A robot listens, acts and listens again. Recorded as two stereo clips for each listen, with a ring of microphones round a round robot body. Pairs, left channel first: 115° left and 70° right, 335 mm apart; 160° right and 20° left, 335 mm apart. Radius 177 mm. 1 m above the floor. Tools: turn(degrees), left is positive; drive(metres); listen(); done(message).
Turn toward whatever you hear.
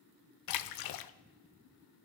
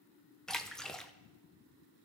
turn(degrees=115)
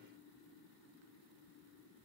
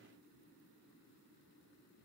done("I heard a splash from this way, but can't make it out now.")